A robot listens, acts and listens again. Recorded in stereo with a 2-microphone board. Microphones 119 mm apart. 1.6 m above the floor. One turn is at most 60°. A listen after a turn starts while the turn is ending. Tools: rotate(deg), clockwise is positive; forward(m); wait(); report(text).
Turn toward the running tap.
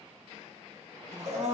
wait()
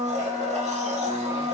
wait()
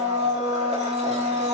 report("I can't make out a running tap, only a blender.")